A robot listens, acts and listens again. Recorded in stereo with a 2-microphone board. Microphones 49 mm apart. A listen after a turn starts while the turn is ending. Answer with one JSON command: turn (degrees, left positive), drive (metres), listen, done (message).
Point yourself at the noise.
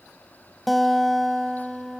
{"turn": 30}
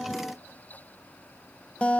{"turn": 150}
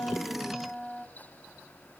{"done": "Facing the guitar, under 1 m away."}